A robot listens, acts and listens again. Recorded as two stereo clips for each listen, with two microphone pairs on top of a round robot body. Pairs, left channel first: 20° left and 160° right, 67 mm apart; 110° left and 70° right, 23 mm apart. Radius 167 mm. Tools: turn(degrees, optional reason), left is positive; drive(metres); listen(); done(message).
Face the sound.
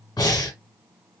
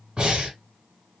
turn(degrees=-15, reason="The breathing: 15° right.")
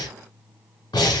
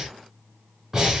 done("Facing the breathing.")